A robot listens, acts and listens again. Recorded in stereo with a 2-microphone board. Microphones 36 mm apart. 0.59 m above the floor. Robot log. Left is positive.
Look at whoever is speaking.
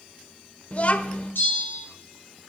note: The child speaking: about 45° left or 135° left.
cmd yaw +45
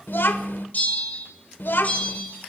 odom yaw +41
note: So it is at 95° left.
cmd yaw +95
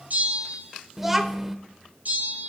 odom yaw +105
note: The child speaking is now 10° right.
cmd yaw -10
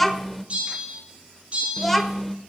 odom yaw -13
end: Facing the child speaking, 1 to 2 m away.